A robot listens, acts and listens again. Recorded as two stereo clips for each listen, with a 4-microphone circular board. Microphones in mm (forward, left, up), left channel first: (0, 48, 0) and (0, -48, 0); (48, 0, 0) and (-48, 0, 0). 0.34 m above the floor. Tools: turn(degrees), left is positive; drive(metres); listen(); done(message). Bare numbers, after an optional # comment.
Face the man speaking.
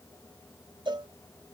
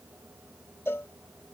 listen()
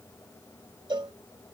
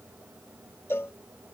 listen()
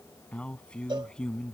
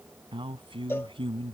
# The man speaking: 170° left.
turn(170)
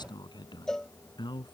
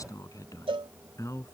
# The man speaking is now 55° left.
turn(55)
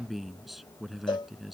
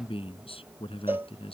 done("Facing the man speaking.")